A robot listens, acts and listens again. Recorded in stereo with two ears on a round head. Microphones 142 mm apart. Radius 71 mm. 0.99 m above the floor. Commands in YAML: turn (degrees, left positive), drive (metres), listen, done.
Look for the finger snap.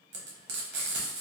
listen: true
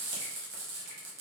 listen: true
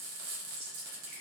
done: "I can't make out a finger snap to turn to."